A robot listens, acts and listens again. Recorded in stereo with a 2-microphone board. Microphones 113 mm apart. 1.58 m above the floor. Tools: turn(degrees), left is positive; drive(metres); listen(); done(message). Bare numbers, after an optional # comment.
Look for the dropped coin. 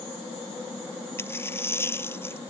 # The dropped coin: about 20° left or 160° left.
turn(20)
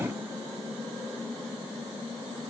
listen()
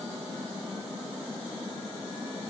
done("I heard a dropped coin, but can't make it out now. It was about straight ahead or 140° left.")